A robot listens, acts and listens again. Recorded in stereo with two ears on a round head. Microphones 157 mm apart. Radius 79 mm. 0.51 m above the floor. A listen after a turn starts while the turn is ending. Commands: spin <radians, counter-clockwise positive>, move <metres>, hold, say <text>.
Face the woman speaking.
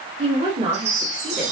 spin -0.61
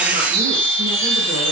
hold
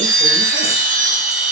hold
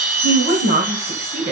spin -1.83
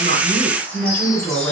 spin 0.17
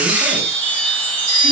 hold
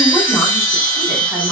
hold
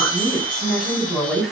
say Facing the woman speaking.